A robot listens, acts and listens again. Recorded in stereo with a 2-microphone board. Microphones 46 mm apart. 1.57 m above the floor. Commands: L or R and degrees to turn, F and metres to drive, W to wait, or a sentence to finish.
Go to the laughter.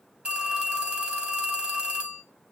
W
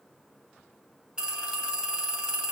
W
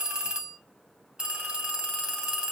I can't make out laughter to turn to.